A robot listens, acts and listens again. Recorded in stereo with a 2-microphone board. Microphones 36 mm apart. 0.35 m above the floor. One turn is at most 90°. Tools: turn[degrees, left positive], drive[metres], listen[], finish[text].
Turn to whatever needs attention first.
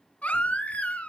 Thought: The baby crying: about 45° left or 135° left.
Action: turn[45]
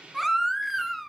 Action: finish[Found it: a baby crying, straight ahead.]